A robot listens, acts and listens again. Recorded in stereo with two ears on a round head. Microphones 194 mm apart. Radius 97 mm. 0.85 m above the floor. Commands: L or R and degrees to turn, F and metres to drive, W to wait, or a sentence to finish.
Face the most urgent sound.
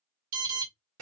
R75
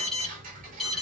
Facing the alarm.